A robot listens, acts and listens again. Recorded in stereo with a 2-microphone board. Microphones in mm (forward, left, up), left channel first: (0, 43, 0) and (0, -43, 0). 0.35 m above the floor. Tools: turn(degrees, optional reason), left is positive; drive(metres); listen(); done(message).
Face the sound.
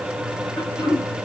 turn(degrees=30, reason="The throat clearing: about 30° left or 150° left.")
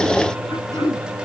turn(degrees=120, reason="So it is at 120° left.")
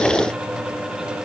listen()
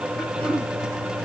turn(degrees=20, reason="The throat clearing is now 20° left.")
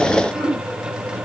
done("Facing the throat clearing, 2 to 4 m away.")